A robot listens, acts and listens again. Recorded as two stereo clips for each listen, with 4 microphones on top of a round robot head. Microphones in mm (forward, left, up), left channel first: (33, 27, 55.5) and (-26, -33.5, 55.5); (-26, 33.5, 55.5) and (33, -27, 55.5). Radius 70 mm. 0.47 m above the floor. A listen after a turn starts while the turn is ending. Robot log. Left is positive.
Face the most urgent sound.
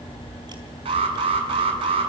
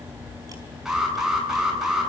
note: The alarm: 130° right.
cmd yaw -130
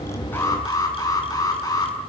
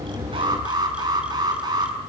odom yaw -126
end: Found it: an alarm, straight ahead, over 4 m away.